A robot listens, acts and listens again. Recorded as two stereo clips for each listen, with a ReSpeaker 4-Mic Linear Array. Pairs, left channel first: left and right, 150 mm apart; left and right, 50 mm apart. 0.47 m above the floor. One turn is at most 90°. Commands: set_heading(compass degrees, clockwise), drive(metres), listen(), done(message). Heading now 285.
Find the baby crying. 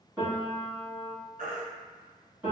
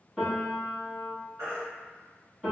set_heading(355)
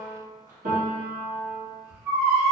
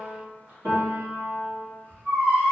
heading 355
set_heading(20)
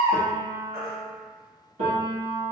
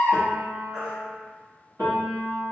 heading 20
set_heading(35)
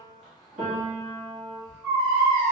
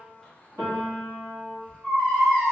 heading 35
done("Found it: a baby crying, straight ahead, 1 to 2 m away.")